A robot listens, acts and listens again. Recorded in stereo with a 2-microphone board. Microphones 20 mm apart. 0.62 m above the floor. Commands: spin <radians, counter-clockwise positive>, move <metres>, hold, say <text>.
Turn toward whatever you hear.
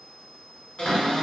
spin 1.57
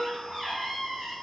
spin -0.17
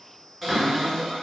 say Facing the cupboard door, 1 to 2 m away.